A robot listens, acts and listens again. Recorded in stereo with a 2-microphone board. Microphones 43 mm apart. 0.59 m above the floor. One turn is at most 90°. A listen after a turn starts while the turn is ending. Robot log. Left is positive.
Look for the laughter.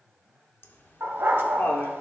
note: The laughter: about 60° left or 120° left.
cmd yaw +60
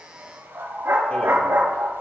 cmd idle
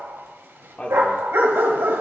note: So it is at 30° left.
cmd yaw +30
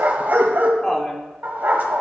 note: The laughter is now 15° left.
cmd yaw +15
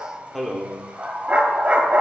end: Found it: laughter, straight ahead, 1 to 2 m away.